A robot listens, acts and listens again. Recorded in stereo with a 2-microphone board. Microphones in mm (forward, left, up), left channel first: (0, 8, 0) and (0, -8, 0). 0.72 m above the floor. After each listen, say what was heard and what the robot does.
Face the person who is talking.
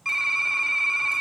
Keep listening.
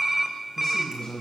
The man speaking: about 50° left or 130° left. Turn 50° left.
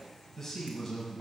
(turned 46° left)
Found it: a man speaking, straight ahead.